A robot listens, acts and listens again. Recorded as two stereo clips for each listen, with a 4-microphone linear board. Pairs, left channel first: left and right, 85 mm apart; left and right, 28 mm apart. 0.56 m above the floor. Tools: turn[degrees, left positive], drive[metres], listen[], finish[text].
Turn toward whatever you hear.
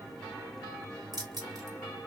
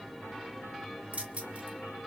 Thought: The keys jangling: about 50° right or 130° right.
Action: turn[-50]
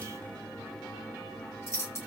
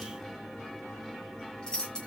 Thought: So it is at 35° left.
Action: turn[35]
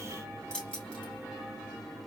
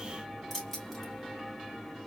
Thought: The keys jangling is now 15° left.
Action: turn[15]
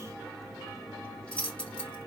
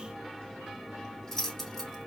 Thought: The keys jangling is now 15° left.
Action: turn[15]
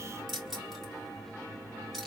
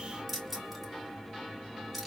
Action: finish[Found it: keys jangling, straight ahead.]